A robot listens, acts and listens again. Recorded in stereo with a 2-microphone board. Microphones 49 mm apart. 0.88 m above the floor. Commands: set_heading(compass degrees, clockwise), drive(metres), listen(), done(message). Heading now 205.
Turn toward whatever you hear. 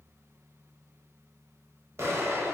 set_heading(270)
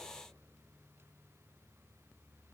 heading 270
listen()
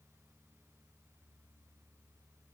done("I heard an explosion, but can't make it out now. It was about straight ahead or 50° right.")